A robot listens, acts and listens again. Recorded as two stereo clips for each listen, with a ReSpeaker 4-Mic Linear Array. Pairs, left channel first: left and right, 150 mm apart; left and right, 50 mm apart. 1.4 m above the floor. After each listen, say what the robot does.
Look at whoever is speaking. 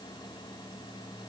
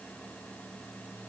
Keep listening.
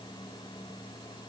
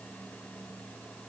Keep listening.
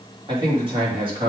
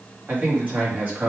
Turn 35° right.
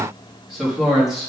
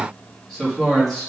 Facing the man speaking.